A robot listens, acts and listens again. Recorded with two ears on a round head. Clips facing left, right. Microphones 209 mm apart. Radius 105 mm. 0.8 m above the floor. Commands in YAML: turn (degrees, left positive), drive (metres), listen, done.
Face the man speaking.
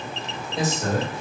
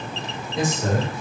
turn: 30
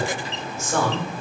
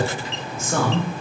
turn: -50
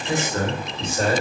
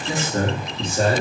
turn: -35
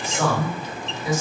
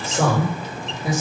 turn: -25
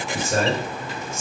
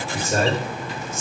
turn: -15
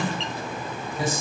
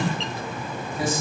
done: "Facing the man speaking."